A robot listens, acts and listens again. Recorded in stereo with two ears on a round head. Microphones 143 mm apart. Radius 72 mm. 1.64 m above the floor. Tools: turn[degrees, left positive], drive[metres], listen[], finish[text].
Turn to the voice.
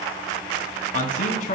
Thought: The man speaking: about 55° left or 125° left.
Action: turn[55]
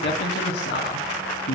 Thought: So it is at 75° left.
Action: turn[75]
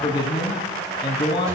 Thought: The man speaking is now 30° left.
Action: turn[30]
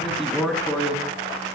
Action: finish[Facing the man speaking, 2 to 4 m away.]